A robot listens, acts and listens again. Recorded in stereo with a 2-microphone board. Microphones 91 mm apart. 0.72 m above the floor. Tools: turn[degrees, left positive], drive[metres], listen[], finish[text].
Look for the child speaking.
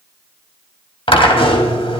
Action: listen[]
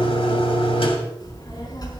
Thought: The child speaking: about 45° left or 135° left.
Action: turn[45]
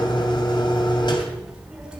Thought: So it is at 10° right.
Action: turn[-10]
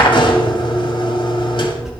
Action: finish[Facing the child speaking, over 4 m away.]